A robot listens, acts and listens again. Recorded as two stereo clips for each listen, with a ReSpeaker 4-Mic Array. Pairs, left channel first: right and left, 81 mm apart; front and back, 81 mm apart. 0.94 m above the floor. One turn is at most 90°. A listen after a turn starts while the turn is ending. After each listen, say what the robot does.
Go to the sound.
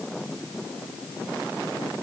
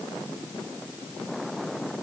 Keep listening.
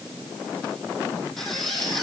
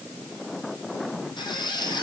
Drive 1.0 m forward.
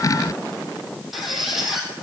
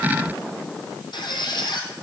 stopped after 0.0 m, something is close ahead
Blocked. The squeak is further on, straight ahead.